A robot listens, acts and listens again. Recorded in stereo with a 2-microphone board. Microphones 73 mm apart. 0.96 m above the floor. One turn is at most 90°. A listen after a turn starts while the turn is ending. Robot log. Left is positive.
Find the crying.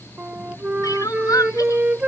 note: The crying: about 55° left or 125° left.
cmd yaw +55
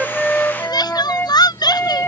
note: So it is at 70° left.
cmd yaw +70
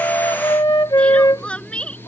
note: The crying is now 15° left.
cmd yaw +15
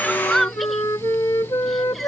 end: Facing the crying.